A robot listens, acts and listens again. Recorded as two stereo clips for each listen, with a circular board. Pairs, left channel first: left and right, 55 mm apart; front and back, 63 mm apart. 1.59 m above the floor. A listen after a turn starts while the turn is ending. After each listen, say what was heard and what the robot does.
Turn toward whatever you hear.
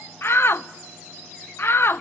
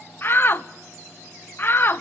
The shout: 50° left. Turn 50° left.
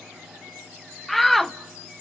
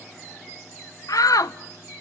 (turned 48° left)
Facing the shout.